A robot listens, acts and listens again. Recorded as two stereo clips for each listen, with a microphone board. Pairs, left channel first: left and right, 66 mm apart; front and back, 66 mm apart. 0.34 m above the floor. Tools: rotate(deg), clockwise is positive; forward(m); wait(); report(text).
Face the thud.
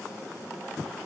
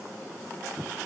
wait()
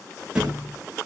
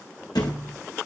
rotate(15)
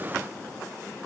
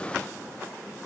report("I heard a thud from this way, but can't make it out now.")